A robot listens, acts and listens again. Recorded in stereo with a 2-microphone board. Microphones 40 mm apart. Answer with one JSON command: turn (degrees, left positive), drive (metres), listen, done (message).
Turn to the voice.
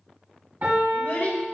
{"turn": 65}
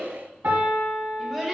{"done": "Found it: a child speaking, straight ahead, 2 to 4 m away."}